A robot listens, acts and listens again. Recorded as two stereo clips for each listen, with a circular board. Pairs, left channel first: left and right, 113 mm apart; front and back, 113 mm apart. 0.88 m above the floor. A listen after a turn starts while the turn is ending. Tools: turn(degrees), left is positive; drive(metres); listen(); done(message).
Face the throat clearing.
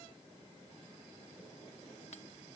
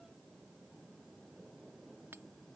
listen()
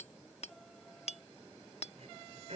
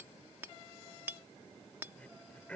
turn(degrees=-80)
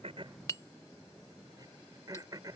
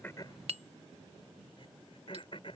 turn(degrees=-35)
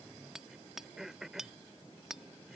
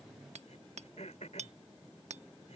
done("Found it: throat clearing, straight ahead.")